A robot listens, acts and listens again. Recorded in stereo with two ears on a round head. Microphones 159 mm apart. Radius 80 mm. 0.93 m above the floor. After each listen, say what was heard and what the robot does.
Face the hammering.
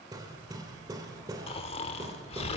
The hammering: about 20° right or 160° right. Turn 20° right.
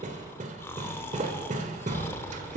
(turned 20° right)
So it is at 135° right. Turn 135° right.
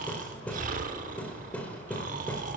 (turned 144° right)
The hammering is now 10° left. Turn 10° left.
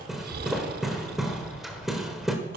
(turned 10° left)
Found it: hammering, straight ahead, 1 to 2 m away.